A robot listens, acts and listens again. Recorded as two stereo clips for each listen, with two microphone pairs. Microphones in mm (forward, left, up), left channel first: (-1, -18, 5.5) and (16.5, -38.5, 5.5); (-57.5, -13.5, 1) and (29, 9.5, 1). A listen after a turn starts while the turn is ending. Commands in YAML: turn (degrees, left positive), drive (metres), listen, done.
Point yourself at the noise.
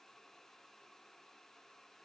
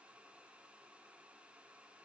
listen: true
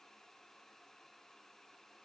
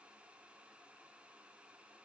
listen: true
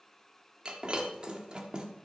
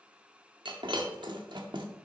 done: "Found it: breaking glass, straight ahead, 1 to 2 m away."